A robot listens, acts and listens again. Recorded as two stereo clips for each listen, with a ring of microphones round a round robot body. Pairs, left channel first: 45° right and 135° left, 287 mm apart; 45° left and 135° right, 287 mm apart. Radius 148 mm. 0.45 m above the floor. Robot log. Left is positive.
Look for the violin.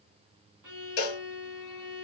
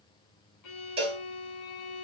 note: The violin: 60° left.
cmd yaw +60
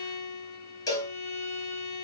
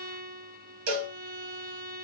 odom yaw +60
end: Facing the violin, 1 to 2 m away.